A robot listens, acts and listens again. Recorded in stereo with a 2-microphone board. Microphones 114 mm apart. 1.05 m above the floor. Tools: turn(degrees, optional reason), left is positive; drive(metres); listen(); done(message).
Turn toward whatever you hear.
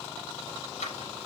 turn(degrees=90)
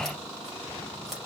listen()
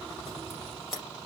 done("Found it: scissors, straight ahead, over 4 m away.")